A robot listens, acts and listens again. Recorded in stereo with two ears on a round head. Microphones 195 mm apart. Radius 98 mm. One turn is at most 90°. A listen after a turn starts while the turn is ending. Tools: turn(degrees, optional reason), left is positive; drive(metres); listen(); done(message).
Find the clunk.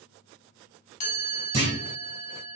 turn(degrees=-30, reason="The clunk: about 30° right or 150° right.")
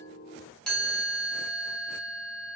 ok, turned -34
listen()
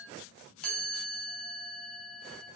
done("I heard a clunk, but can't make it out now. It was about 5° left or 115° right.")